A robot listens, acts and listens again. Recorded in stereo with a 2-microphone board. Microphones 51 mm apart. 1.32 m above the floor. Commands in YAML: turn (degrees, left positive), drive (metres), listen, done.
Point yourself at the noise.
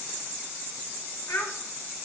turn: 90
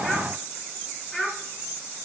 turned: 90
done: "Found it: a child speaking, straight ahead, 2 to 4 m away."